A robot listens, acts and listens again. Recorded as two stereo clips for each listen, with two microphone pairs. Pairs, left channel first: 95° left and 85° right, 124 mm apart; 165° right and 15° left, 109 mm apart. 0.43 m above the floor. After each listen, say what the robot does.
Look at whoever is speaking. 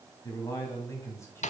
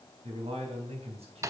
Turn 25° left.
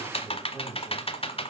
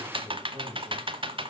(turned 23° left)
Facing the man speaking.